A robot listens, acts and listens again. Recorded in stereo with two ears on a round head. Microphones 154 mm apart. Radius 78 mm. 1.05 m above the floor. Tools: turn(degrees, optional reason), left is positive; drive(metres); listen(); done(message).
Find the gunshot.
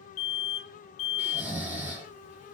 listen()
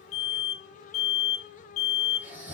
listen()
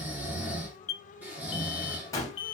turn(degrees=20, reason="The gunshot: about 20° left or 160° left.")
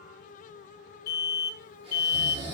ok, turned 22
listen()
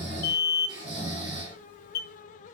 done("I heard a gunshot, but can't make it out now. It was about straight ahead or 135° left.")